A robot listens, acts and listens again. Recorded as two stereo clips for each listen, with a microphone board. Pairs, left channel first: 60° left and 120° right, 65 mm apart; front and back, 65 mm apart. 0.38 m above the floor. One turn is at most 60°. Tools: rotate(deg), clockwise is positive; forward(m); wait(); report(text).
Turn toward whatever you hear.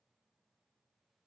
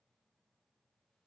wait()
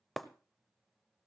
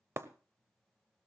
rotate(-60)
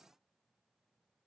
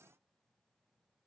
rotate(-60)
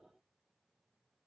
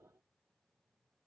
rotate(-25)
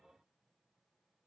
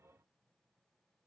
report("I heard breaking glass from this way, but can't make it out now.")